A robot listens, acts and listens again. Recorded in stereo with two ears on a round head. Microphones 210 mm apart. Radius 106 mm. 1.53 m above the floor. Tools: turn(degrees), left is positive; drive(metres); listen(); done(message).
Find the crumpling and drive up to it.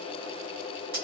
listen()
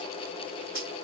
listen()
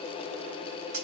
done("I can't make out crumpling, only cutlery clinking.")